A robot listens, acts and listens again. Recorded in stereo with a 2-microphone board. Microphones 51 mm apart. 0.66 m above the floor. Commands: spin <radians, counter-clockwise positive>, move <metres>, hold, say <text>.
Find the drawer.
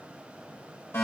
hold
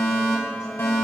hold
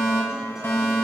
say I can't make out a drawer to turn to.